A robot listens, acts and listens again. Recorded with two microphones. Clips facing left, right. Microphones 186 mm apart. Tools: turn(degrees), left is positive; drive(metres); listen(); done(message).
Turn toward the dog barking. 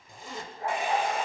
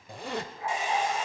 turn(degrees=45)
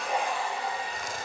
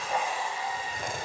listen()
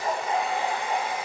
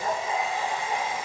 turn(degrees=35)
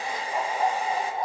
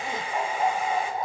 turn(degrees=20)
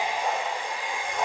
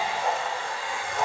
done("Found it: a dog barking, straight ahead.")